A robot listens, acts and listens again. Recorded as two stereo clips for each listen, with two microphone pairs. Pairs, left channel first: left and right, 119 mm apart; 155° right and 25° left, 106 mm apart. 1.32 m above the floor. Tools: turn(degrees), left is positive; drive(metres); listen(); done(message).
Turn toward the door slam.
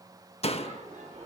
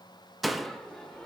turn(degrees=115)
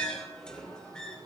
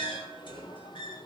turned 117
done("Facing where the door slam came from. I can't hear it now.")